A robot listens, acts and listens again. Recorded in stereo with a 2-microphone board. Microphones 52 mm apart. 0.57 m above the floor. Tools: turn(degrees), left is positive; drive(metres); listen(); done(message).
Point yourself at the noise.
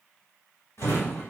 turn(degrees=65)
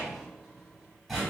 done("Found it: a drawer, straight ahead, 1 to 2 m away.")